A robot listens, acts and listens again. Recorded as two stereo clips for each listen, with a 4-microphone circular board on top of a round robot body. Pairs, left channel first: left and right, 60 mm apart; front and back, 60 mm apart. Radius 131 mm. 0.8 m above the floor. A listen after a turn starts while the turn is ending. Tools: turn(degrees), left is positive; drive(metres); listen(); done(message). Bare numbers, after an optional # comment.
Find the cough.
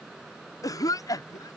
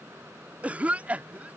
# The cough: 110° left.
turn(110)
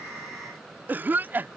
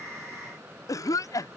# The cough is now 30° right.
turn(-30)
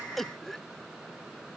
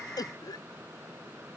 done("Found it: a cough, straight ahead.")